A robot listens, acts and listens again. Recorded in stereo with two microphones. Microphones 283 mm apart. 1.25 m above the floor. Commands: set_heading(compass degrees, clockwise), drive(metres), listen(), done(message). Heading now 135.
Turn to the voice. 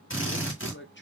set_heading(95)
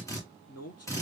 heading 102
set_heading(7)
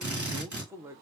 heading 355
set_heading(5)
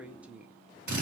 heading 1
done("Facing the man speaking.")